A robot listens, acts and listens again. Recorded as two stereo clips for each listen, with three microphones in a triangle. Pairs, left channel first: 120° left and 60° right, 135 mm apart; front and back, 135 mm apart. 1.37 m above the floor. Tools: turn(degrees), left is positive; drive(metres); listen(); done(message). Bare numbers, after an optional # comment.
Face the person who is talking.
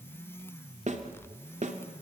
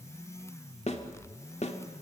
listen()
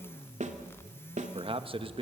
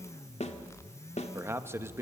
# The man speaking: 110° right.
turn(-110)
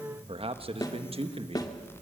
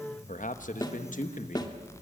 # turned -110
# The man speaking is now 15° right.
turn(-15)
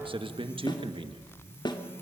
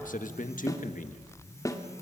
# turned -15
# The man speaking is now 10° right.
turn(-10)
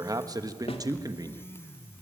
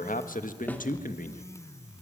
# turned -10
done("Facing the man speaking.")